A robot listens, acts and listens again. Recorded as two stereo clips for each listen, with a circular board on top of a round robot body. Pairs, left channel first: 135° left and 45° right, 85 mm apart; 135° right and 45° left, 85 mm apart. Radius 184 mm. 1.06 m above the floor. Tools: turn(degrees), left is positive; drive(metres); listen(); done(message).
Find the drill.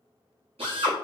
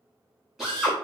turn(degrees=-40)
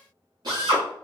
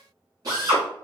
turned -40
done("Facing the drill.")